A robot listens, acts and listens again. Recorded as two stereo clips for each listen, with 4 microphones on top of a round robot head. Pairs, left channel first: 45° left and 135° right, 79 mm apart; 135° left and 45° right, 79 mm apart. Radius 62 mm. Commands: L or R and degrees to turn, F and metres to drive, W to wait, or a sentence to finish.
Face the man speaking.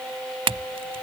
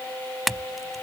W
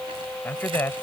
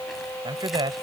R15
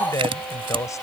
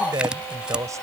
Found it: a man speaking, straight ahead.